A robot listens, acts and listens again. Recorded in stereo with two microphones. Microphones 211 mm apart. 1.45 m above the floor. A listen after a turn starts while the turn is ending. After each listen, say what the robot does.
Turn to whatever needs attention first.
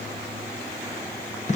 Keep listening.
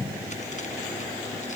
Keep listening.
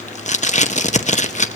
I can't make out anything urgent, only tape being pulled.